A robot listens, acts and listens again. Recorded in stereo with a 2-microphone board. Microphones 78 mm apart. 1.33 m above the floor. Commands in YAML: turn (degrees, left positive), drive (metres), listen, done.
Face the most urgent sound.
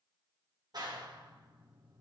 listen: true
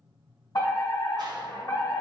turn: 55
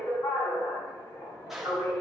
turn: 65
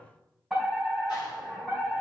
done: "Facing the fire alarm."